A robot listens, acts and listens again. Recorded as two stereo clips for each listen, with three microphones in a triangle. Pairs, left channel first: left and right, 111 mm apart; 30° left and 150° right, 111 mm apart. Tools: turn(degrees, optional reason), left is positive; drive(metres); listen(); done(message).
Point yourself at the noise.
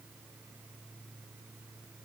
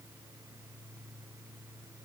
listen()
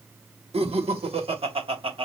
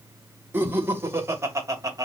turn(degrees=-95, reason="The laughter: 95° right.")
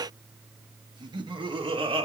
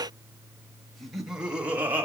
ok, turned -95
turn(degrees=-80, reason="The laughter is now 80° right.")
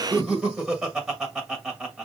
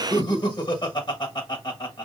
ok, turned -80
done("Found it: laughter, straight ahead, 1 to 2 m away.")